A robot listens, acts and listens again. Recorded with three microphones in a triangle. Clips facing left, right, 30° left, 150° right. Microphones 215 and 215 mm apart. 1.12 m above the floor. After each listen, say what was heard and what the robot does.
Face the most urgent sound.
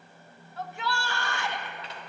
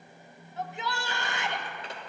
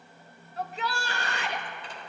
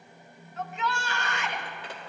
The shout: 25° right. Turn 25° right.
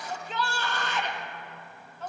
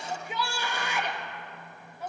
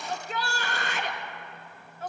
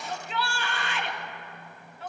The shout is now 15° right. Turn 15° right.
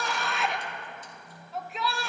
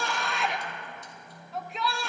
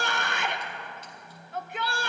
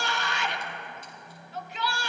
Facing the shout.